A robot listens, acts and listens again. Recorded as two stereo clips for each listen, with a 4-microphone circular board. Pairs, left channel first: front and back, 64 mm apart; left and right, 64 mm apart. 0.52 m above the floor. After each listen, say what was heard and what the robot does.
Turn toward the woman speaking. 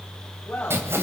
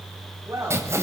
The woman speaking: 70° right. Turn 70° right.
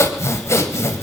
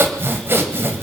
Keep listening.
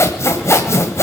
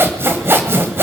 Keep listening.
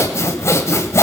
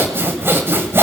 I heard a woman speaking from this way, but can't make it out now.